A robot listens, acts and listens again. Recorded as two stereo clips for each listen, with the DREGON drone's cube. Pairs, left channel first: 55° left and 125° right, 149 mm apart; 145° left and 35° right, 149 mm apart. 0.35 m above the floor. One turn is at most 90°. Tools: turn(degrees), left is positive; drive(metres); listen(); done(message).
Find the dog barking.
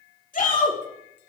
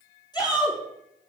listen()
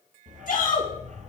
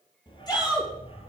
turn(degrees=-90)
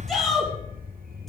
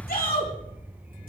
turn(degrees=-90)
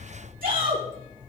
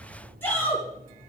turn(degrees=-45)
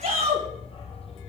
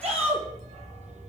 done("Facing the dog barking, 2 to 4 m away.")